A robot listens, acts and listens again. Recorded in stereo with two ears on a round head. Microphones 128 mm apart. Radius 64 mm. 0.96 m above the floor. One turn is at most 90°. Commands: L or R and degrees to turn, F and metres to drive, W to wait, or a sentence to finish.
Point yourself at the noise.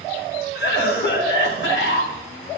L90
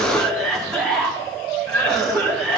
Found it: a cough, straight ahead.